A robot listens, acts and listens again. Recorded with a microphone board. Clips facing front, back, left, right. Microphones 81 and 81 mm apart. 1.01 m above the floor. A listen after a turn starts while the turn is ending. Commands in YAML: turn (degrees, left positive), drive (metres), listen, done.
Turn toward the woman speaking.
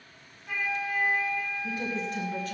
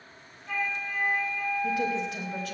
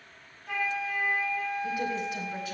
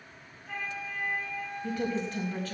turn: 165
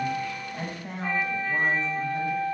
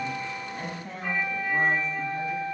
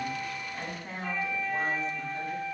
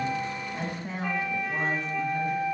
turn: -25
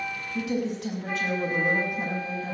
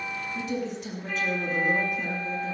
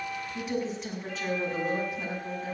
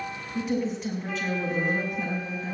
done: "Facing the woman speaking."